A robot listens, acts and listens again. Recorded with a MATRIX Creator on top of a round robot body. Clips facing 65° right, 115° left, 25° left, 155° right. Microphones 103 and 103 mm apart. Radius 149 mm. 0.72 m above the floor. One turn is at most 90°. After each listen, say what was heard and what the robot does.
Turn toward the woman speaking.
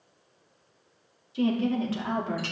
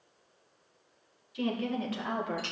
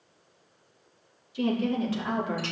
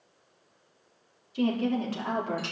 The woman speaking: 120° right. Turn 90° right.
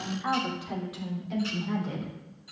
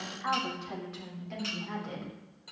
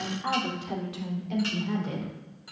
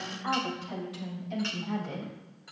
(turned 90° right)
The woman speaking is now 15° left. Turn 15° left.
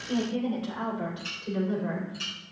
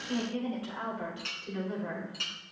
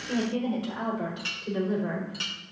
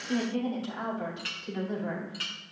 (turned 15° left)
Found it: a woman speaking, straight ahead.